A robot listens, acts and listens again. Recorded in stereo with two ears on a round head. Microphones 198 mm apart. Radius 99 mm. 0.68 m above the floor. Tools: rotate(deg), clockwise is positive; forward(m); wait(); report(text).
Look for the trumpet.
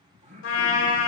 rotate(-60)
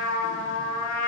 rotate(-60)
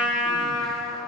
report("Facing the trumpet, 1 to 2 m away.")